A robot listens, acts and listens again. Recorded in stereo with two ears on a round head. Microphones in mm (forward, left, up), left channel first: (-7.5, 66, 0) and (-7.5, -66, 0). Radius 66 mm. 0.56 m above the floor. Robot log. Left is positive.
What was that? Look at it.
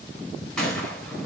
cmd yaw +30
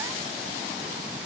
cmd idle
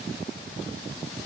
end: I heard a gunshot, but can't make it out now. It was about 25° right or 145° left.